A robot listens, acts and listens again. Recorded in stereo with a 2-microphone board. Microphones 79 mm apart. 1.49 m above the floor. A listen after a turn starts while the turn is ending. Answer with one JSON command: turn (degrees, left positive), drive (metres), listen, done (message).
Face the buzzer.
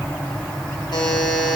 {"turn": 65}
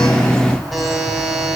{"done": "Found it: a buzzer, straight ahead, 2 to 4 m away."}